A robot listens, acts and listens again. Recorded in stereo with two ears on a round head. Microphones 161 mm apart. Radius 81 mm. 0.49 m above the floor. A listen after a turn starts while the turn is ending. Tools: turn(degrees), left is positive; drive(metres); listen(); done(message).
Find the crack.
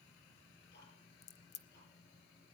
turn(degrees=40)
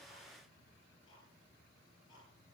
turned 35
listen()
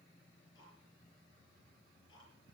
done("I heard a crack, but can't make it out now. It was about 5° left or 105° left.")